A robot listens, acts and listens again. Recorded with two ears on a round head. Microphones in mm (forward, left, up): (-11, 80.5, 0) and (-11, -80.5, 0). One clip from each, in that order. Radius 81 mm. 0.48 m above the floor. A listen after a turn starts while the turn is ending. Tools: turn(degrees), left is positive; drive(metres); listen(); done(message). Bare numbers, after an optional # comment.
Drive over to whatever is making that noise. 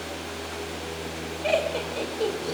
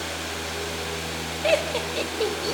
# The laughter: about 50° right or 130° right.
turn(-50)
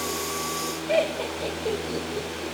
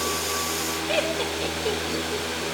# So it is at 70° right.
turn(-70)
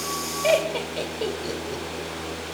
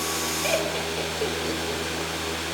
drive(1.0)
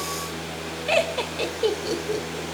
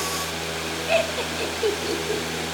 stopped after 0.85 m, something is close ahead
# The laughter is now 10° right.
turn(-10)
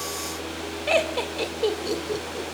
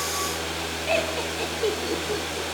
done("I am next to the laughter.")